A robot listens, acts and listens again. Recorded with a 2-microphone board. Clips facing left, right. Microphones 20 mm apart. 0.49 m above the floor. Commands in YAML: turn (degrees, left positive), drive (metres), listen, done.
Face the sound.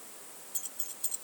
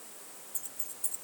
turn: 45
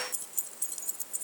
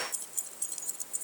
done: "Found it: keys jangling, straight ahead."